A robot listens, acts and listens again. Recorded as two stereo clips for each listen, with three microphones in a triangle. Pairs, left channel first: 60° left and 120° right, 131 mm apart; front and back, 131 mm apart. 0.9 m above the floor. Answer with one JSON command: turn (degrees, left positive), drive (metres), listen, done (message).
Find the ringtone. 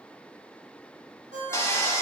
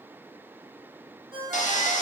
{"turn": -130}
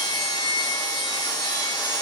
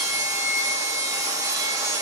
{"listen": true}
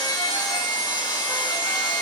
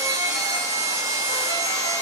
{"listen": true}
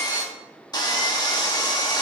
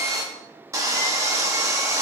{"done": "I heard a ringtone from this way, but can't make it out now."}